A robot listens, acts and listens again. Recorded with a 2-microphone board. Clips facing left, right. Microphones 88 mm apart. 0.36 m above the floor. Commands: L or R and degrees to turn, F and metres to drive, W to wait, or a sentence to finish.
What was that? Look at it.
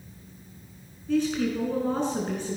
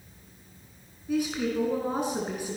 R30
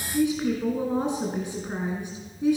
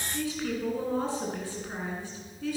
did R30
L20
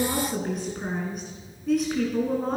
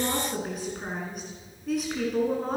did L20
Facing the woman speaking.